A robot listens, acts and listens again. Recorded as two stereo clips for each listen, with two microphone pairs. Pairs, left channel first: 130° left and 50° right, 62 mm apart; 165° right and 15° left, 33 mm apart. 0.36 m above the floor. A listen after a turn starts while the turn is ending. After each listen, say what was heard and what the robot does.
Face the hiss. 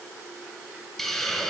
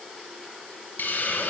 The hiss: 150° right. Turn 150° right.
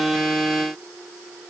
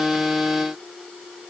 Keep listening.
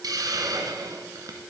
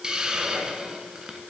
The hiss is now 55° right. Turn 55° right.
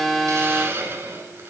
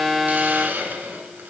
Facing the hiss.